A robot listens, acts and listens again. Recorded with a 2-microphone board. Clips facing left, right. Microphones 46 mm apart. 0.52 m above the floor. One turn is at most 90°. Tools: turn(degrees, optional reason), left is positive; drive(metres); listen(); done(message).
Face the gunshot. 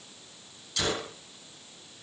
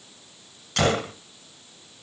turn(degrees=-55, reason="The gunshot: about 55° right or 125° right.")
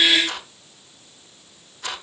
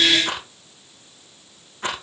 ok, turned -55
listen()
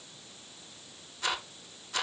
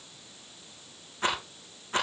done("I heard a gunshot, but can't make it out now. It was about straight ahead or 70° right.")